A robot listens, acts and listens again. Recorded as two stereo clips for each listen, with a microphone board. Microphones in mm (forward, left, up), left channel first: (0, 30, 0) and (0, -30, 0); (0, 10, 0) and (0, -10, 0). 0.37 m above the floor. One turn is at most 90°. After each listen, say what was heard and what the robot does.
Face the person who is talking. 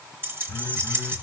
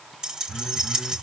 Keep listening.
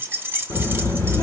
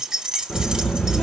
The child speaking: about 70° left or 110° left. Turn 70° left.
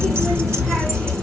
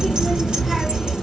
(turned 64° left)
So it is at 10° left. Turn 10° left.
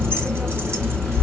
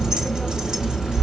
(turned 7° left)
Found it: a child speaking, straight ahead, 2 to 4 m away.